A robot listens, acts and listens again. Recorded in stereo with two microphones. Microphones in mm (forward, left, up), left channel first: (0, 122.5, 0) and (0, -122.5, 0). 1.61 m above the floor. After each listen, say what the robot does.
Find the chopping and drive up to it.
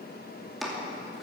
Turn 30° left.
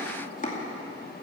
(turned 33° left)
Turn 145° left.
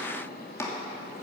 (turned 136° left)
Turn 10° left.
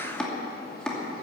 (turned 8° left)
Drive 1.0 m forward.
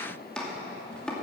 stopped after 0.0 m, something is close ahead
Something is in my way. I am facing the chopping but have not reached it.